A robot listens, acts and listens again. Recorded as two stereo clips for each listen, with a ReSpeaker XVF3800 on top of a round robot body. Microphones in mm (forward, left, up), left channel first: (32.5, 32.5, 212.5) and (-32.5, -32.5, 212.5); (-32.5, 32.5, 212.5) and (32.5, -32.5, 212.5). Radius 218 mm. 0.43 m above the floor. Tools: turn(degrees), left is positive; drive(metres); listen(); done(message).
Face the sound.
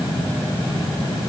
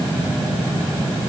listen()
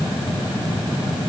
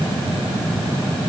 listen()
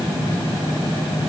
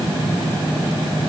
done("I can't make out anything to turn to.")